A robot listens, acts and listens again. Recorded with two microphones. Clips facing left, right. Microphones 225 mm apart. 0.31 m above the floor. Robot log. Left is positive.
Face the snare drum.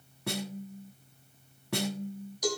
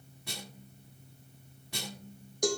note: The snare drum: about 70° left or 110° left.
cmd yaw +70
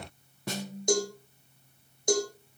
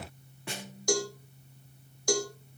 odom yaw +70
note: So it is at 40° left.
cmd yaw +40
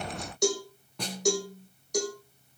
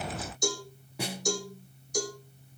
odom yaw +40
note: The snare drum is now 10° right.
cmd yaw -10
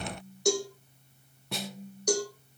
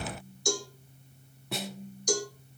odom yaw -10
end: Found it: a snare drum, straight ahead, 1 to 2 m away.